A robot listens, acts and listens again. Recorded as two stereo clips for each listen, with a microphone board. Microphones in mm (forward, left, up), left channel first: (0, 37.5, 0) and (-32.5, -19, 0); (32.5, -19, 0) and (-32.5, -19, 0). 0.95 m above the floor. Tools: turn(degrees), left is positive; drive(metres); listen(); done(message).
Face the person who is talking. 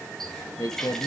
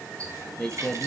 turn(degrees=75)
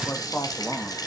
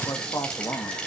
turn(degrees=10)
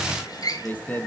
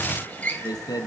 done("Found it: a man speaking, straight ahead, 1 to 2 m away.")